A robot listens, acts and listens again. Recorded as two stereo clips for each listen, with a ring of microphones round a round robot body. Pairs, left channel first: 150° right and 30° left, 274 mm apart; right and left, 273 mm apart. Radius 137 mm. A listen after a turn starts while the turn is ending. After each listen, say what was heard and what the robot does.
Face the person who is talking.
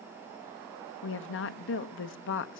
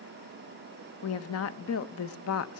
The woman speaking: 115° right. Turn 115° right.
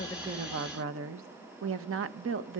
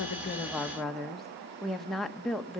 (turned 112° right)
Found it: a woman speaking, straight ahead.